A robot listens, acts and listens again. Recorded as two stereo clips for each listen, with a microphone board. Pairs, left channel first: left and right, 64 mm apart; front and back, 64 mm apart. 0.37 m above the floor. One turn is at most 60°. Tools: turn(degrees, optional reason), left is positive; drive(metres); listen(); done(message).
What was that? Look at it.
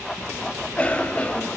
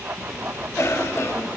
turn(degrees=25, reason="The cough: 25° left.")
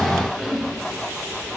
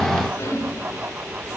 done("Facing the cough.")